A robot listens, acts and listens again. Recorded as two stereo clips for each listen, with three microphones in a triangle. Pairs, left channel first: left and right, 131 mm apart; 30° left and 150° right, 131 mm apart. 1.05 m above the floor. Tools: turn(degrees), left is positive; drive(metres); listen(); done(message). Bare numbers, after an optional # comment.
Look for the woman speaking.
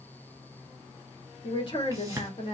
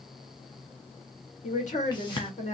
# The woman speaking: 50° left.
turn(50)
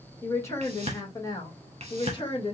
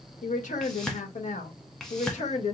# The woman speaking is now 45° left.
turn(45)
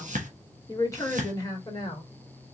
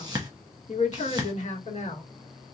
# The woman speaking is now 40° left.
turn(40)
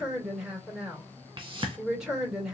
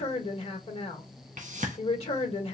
done("Found it: a woman speaking, straight ahead, 1 to 2 m away.")